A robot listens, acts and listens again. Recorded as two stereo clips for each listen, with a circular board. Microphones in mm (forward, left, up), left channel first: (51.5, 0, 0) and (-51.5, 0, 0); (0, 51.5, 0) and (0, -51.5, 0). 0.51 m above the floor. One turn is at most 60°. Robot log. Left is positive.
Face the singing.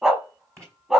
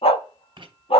cmd idle
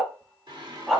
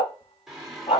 note: The singing: straight behind.
cmd yaw +60
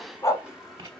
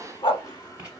note: The singing is now 100° left.
cmd yaw +60
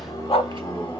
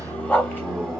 end: Found it: singing, straight ahead.